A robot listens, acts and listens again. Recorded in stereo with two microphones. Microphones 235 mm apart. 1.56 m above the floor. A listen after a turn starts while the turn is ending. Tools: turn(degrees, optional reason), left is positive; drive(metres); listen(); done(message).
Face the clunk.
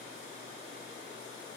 listen()
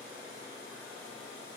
listen()
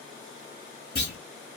turn(degrees=70, reason="The clunk: about 70° left or 110° left.")
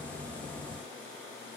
listen()
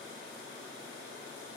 done("I heard a clunk, but can't make it out now. It was about straight ahead or 40° left.")